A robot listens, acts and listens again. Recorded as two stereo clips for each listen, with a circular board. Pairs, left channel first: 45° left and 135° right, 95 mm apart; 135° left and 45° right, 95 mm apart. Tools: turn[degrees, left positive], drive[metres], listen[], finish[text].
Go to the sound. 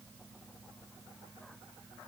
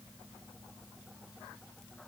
Action: listen[]
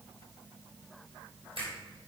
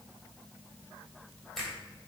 Thought: The finger snap: 140° right.
Action: turn[-140]
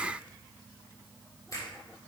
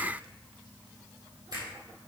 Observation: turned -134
Thought: The finger snap is now 10° right.
Action: turn[-10]
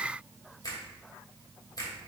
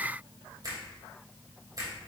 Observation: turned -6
Action: drive[1.0]
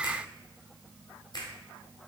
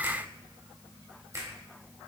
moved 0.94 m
Action: drive[1.0]
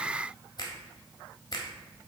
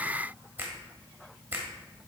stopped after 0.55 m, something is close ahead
Thought: The finger snap is now 15° left.
Action: turn[15]
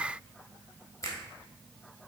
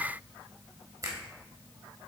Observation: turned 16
Action: finish[I am next to the finger snap.]